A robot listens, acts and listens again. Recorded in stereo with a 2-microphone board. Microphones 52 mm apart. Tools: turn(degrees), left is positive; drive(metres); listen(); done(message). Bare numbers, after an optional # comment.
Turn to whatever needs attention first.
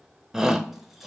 turn(-30)
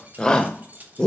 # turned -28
# So it is at 20° left.
turn(20)
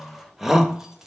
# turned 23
done("Found it: a shout, straight ahead, under 1 m away.")